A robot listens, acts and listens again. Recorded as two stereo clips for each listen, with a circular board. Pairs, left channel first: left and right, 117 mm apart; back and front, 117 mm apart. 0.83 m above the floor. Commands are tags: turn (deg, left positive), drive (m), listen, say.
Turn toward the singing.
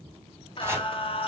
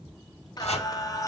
<turn deg="120"/>
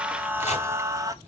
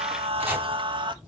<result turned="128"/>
<turn deg="-35"/>
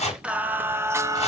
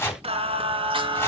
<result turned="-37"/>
<turn deg="-35"/>
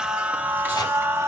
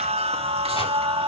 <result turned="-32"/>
<turn deg="-25"/>
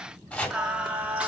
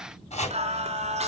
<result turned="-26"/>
<turn deg="-10"/>
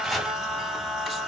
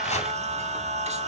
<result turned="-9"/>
<say>Facing the singing.</say>